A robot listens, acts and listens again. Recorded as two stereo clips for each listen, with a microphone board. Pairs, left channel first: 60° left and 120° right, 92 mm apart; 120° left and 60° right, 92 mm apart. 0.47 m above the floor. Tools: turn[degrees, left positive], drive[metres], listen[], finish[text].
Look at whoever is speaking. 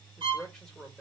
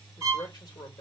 Thought: The man speaking: 145° left.
Action: turn[145]
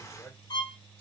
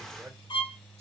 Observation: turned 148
Action: finish[Facing the man speaking.]